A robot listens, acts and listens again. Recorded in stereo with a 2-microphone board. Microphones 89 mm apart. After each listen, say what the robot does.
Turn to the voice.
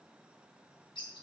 Keep listening.
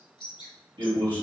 Turn 90° right.
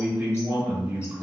Turn 15° right.
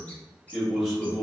Found it: a man speaking, straight ahead, 1 to 2 m away.